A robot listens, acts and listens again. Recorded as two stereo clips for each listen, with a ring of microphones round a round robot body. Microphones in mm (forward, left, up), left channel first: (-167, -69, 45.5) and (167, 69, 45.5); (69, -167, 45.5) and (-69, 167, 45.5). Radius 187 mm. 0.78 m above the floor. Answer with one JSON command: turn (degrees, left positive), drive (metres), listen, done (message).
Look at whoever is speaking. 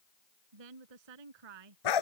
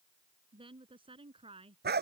{"turn": 35}
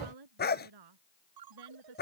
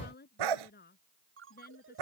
{"done": "Found it: a woman speaking, straight ahead."}